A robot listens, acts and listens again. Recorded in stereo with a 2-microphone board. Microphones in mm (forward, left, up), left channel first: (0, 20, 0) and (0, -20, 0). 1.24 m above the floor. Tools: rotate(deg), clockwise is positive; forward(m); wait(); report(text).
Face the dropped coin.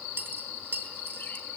rotate(70)
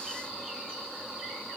wait()
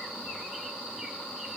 report("I heard a dropped coin, but can't make it out now. It was about straight ahead or 40° right.")